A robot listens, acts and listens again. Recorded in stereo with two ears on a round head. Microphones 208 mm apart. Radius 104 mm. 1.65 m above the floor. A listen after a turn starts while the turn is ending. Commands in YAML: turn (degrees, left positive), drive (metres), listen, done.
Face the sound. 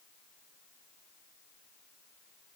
listen: true
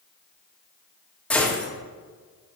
turn: 30
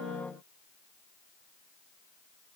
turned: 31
listen: true
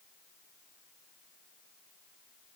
done: "I heard a gunshot, but can't make it out now. It was about 25° right or 145° left."